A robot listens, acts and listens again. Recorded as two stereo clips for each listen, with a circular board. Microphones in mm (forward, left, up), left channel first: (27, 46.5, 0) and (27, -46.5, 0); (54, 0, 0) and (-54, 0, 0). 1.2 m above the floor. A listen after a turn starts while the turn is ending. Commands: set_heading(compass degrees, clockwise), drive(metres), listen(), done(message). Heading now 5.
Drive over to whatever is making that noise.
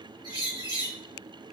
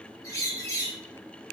set_heading(60)
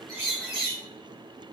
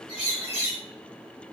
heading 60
drive(1.0)
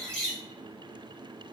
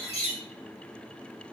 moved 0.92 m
set_heading(50)
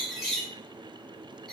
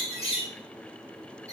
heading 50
drive(1.0)
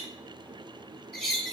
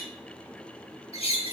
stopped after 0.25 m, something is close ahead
done("Arrived at the bird, straight ahead.")